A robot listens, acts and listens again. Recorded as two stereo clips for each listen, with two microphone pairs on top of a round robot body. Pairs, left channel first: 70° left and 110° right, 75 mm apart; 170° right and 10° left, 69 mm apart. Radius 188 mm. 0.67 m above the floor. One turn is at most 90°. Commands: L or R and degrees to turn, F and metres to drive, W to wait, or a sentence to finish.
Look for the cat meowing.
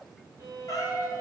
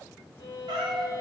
L30
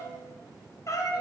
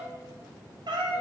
L30
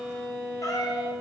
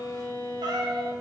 L35
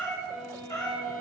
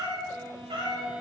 L25
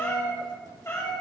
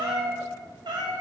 L15
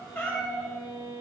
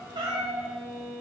Found it: a cat meowing, straight ahead, 2 to 4 m away.